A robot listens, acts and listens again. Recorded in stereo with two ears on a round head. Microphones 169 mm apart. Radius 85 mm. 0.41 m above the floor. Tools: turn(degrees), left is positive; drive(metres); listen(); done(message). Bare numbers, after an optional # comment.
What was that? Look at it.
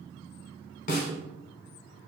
# The snare drum: about 45° left or 135° left.
turn(45)
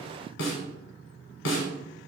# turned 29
# So it is at 105° left.
turn(105)
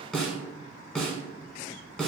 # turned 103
done("Facing the snare drum.")